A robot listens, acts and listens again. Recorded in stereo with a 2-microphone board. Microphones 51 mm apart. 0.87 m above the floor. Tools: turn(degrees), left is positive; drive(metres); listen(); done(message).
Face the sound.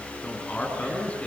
turn(degrees=25)
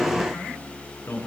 turn(degrees=125)
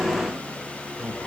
turn(degrees=-10)
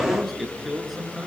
done("Found it: a man speaking, straight ahead, over 4 m away.")